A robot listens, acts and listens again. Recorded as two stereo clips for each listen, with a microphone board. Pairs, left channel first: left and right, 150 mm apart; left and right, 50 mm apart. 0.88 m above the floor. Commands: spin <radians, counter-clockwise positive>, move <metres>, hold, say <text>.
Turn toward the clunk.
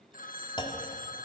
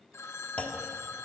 spin 0.52
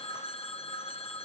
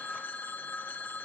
hold
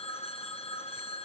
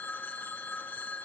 say I heard a clunk, but can't make it out now. It was about straight ahead or 120° left.